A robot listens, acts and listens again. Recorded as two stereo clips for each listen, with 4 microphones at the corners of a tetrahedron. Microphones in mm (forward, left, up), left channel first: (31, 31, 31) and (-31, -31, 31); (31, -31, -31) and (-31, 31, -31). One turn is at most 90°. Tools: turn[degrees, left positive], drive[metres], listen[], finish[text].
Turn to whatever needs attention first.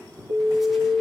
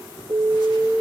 Thought: The alarm: 150° right.
Action: turn[-90]
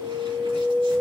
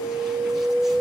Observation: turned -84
Thought: The alarm is now 70° right.
Action: turn[-70]
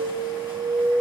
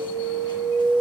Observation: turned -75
Action: finish[Facing the alarm, over 4 m away.]